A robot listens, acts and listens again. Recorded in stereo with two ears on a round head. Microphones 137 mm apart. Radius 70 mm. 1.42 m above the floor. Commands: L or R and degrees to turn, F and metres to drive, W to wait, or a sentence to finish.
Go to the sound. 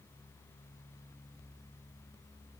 W
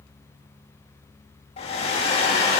L35
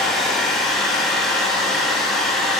F1.0
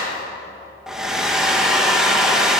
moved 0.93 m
F1.0
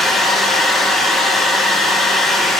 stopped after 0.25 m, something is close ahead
I am next to the hair dryer.